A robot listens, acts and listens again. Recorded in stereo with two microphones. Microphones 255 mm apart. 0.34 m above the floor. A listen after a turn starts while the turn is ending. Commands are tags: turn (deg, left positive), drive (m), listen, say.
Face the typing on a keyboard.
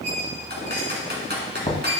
<turn deg="-40"/>
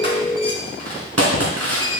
<turn deg="-95"/>
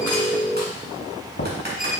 <listen/>
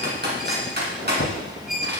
<turn deg="-40"/>
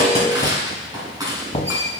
<turn deg="-15"/>
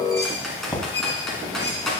<say>Found it: typing on a keyboard, straight ahead, 2 to 4 m away.</say>